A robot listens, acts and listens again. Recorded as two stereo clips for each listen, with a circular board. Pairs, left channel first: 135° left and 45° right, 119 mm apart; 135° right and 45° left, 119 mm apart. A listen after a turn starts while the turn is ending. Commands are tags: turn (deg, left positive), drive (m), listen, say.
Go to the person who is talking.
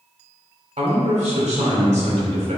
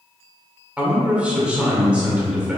<turn deg="-35"/>
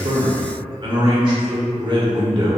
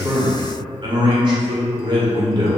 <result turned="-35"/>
<drive m="1.0"/>
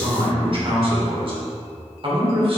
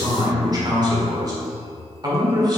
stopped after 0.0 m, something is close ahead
<turn deg="-10"/>
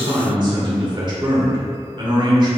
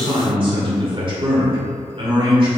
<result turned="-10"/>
<say>Blocked. The man speaking is further on, straight ahead.</say>